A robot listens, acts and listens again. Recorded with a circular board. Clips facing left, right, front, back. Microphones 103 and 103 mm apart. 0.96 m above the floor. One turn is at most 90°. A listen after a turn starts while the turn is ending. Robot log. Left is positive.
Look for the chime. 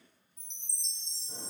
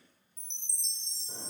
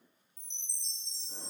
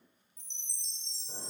note: The chime: 175° left.
cmd yaw +90
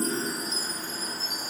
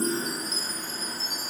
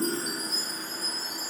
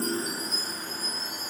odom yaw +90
note: The chime is now 115° left.
cmd yaw +90
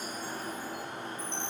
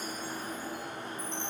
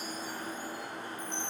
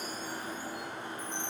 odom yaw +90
note: The chime is now 70° left.
cmd yaw +70
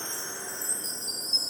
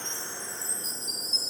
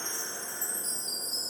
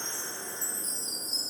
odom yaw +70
end: Facing the chime, 1 to 2 m away.